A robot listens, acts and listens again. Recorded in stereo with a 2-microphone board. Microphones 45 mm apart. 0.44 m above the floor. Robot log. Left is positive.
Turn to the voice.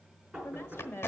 note: The woman speaking: about 55° left or 125° left.
cmd yaw +55
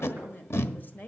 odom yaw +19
note: So it is at 40° left.
cmd yaw +40
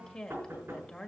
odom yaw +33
note: The woman speaking is now 20° left.
cmd yaw +20
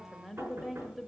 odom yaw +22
end: Found it: a woman speaking, straight ahead, 1 to 2 m away.